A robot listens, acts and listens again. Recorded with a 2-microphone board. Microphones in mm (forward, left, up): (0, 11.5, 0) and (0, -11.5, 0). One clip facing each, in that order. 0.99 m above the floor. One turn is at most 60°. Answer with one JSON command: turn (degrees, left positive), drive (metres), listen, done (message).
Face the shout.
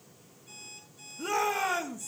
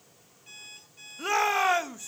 {"turn": -40}
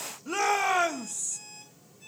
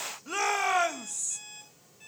{"done": "Found it: a shout, straight ahead."}